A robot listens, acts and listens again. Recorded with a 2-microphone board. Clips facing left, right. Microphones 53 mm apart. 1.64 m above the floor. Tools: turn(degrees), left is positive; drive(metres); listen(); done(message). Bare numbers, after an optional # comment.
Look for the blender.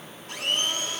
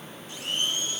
# The blender: about 60° left or 120° left.
turn(60)
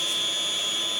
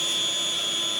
done("Facing the blender.")